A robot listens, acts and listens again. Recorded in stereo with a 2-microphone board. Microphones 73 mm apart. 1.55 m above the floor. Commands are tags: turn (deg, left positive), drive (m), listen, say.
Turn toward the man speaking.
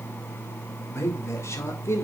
<turn deg="40"/>
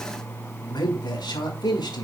<turn deg="100"/>
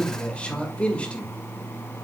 <turn deg="15"/>
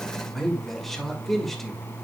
<say>Found it: a man speaking, straight ahead.</say>